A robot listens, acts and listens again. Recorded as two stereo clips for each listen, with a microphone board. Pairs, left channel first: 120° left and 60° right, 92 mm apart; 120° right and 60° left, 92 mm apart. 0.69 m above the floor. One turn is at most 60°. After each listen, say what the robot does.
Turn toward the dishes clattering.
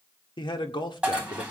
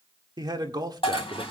Turn 60° right.
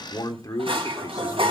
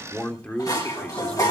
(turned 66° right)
Turn 60° right.
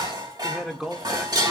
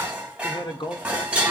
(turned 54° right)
Turn 20° right.
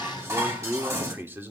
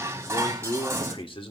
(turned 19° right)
Found it: dishes clattering, straight ahead.